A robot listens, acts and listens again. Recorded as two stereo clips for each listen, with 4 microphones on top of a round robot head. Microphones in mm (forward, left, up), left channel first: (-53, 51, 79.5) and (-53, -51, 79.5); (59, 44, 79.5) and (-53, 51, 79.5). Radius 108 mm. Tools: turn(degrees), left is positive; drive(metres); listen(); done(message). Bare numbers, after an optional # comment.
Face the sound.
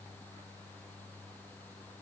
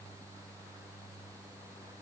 listen()
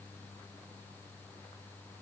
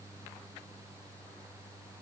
listen()
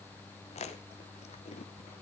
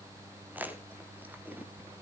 # The chewing: 100° left.
turn(100)
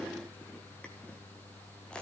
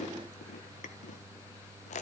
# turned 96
done("Found it: chewing, straight ahead.")